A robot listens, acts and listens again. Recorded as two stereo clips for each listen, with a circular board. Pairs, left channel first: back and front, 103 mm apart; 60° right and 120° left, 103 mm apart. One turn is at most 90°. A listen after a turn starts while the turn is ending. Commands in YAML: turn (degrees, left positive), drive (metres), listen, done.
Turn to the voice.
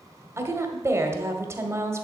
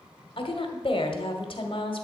turn: -60
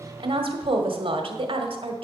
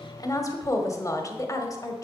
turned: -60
turn: -10
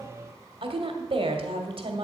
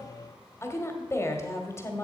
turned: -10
done: "Facing the woman speaking."